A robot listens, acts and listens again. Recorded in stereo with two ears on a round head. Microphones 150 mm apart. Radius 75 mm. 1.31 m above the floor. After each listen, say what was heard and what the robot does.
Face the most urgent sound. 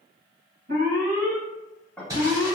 The alarm: about 50° right or 130° right. Turn 50° right.
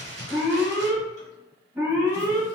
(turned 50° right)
So it is at 10° right. Turn 10° right.
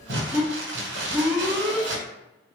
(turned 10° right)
Found it: an alarm, straight ahead.